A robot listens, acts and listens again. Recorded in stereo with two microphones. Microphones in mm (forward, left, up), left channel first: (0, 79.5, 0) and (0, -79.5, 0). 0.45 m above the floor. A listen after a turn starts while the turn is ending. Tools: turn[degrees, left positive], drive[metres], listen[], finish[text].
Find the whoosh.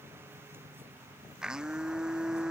Action: listen[]
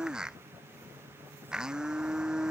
Action: listen[]
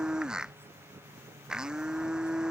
Action: finish[I can't make out a whoosh to turn to.]